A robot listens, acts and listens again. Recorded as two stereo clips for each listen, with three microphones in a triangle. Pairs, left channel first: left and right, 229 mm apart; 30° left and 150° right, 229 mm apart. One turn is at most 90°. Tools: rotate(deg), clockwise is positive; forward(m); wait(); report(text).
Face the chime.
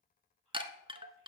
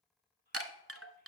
rotate(90)
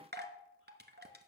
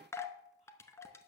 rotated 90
rotate(50)
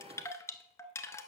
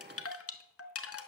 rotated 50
rotate(-15)
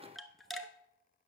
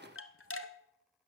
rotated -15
report("Found it: a chime, straight ahead.")